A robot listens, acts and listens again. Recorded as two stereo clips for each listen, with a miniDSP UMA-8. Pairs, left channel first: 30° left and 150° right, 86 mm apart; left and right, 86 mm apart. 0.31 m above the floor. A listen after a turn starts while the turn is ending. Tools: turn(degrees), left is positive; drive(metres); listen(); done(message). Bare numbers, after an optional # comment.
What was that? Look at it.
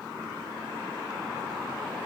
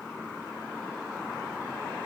listen()
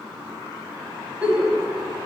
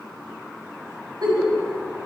# The giggle: 75° right.
turn(-75)
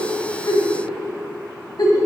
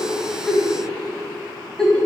done("Facing the giggle, 1 to 2 m away.")